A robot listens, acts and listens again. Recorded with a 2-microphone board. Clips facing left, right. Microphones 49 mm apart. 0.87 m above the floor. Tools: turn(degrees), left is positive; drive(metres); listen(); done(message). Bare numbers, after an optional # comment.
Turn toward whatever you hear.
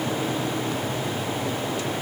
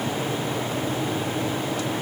listen()
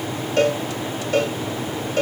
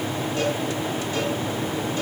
# The cowbell: about 75° left or 105° left.
turn(75)
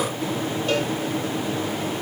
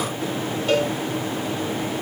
done("Found it: a cowbell, straight ahead.")